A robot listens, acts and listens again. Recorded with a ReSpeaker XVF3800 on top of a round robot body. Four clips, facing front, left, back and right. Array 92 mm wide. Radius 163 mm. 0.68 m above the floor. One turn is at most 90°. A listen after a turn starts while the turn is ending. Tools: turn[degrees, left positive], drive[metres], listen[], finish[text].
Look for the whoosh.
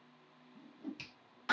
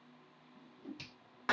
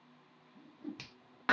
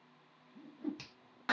Thought: The whoosh: 75° right.
Action: turn[-75]
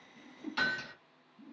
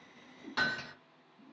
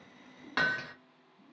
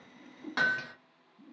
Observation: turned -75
Thought: The whoosh is now 35° right.
Action: turn[-35]
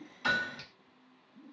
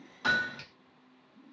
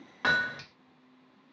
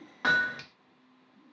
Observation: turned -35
Action: finish[Found it: a whoosh, straight ahead, under 1 m away.]